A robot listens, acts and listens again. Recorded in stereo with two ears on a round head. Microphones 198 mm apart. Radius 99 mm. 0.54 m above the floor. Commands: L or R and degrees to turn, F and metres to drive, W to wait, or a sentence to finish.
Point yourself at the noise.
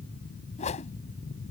L30
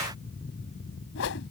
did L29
L120
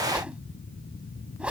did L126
Facing the whoosh.